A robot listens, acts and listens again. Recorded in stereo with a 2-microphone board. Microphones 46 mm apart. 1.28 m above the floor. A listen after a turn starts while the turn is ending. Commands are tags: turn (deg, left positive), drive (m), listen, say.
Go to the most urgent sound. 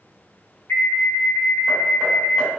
<turn deg="60"/>
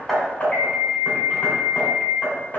<drive m="1.0"/>
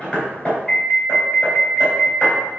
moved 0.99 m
<turn deg="10"/>
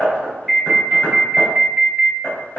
<drive m="1.0"/>
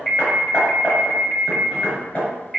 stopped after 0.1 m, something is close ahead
<say>I am next to the alarm.</say>